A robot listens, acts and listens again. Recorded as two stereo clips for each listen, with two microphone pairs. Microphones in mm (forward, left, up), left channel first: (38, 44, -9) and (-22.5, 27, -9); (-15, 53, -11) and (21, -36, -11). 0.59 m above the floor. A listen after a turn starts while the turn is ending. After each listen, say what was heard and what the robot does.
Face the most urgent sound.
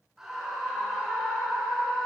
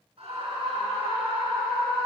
The scream: 85° right. Turn 85° right.
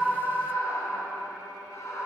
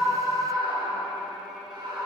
The scream is now 20° right. Turn 20° right.
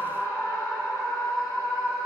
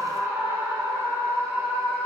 Facing the scream.